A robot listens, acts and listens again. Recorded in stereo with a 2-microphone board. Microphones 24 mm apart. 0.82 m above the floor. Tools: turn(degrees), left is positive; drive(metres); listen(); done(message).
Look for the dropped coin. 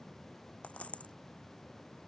turn(degrees=65)
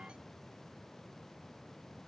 listen()
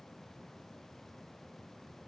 done("I heard a dropped coin, but can't make it out now. It was about straight ahead or 50° left.")